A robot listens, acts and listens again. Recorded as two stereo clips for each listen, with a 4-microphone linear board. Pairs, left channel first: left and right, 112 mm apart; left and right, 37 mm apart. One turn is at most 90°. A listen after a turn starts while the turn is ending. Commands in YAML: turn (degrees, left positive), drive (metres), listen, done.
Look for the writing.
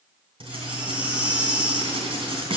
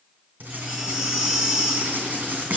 turn: -55
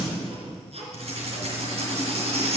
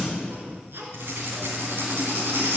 turn: -70
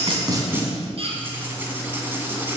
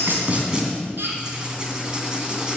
turn: -20
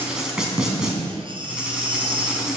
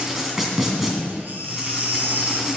done: "Found it: writing, straight ahead, 2 to 4 m away."